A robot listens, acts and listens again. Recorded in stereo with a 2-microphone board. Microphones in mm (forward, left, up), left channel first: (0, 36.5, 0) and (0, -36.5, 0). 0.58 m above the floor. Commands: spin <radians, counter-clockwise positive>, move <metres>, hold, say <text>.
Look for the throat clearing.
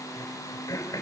spin 0.87
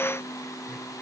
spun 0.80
hold
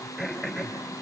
say Facing the throat clearing, 2 to 4 m away.